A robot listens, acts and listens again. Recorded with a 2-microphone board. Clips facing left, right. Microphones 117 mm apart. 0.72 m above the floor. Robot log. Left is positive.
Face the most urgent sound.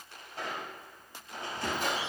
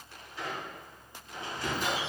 cmd idle
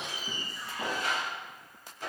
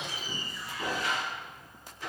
cmd idle
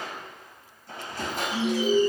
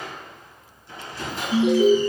note: The alarm: about 65° right or 115° right.
cmd yaw -65
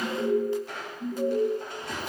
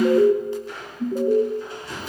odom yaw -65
note: So it is at 50° right.
cmd yaw -50
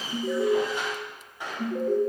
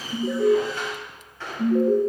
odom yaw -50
end: Found it: an alarm, straight ahead, under 1 m away.